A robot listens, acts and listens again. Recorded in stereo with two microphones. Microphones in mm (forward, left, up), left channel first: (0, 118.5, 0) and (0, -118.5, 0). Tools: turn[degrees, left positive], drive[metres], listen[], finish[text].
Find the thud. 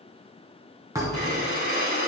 Action: turn[-30]
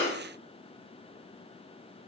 Action: listen[]
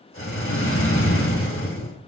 Action: finish[I heard a thud, but can't make it out now. It was about 15° left or 135° right.]